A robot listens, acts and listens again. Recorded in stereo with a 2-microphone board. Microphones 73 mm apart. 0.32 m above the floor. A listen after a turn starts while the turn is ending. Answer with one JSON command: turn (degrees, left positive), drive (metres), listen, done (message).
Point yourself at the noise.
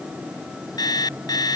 {"turn": 65}
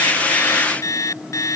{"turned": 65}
{"turn": 50}
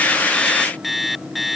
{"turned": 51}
{"done": "Found it: an alarm clock, straight ahead."}